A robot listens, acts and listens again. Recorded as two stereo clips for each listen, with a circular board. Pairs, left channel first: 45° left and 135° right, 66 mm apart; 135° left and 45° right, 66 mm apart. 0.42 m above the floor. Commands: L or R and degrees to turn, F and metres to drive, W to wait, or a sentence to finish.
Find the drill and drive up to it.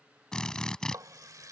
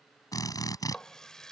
L125
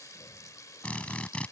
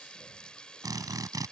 R25
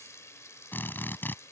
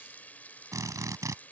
R15
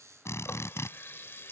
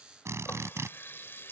F1.0
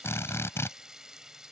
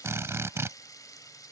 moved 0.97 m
F1.0
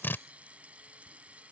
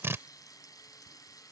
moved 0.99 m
F1.0
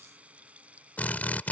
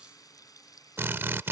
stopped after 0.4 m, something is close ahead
R10
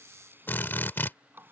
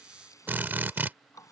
Arrived at the drill, straight ahead.